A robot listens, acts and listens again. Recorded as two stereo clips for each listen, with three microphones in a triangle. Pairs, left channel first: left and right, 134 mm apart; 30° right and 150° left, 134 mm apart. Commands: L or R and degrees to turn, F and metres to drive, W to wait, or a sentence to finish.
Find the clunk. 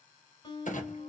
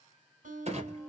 L115
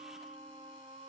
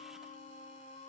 Facing where the clunk came from. I can't hear it now.